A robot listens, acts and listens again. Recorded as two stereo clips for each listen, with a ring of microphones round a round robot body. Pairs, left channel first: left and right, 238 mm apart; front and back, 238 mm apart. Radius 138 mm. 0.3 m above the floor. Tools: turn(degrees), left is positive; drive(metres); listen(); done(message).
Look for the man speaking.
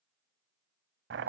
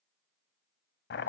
listen()
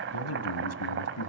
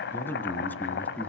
turn(degrees=85)
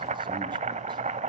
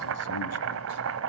listen()
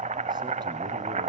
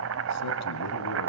listen()
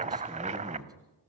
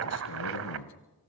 turn(degrees=-15)
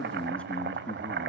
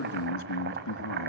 done("Facing the man speaking.")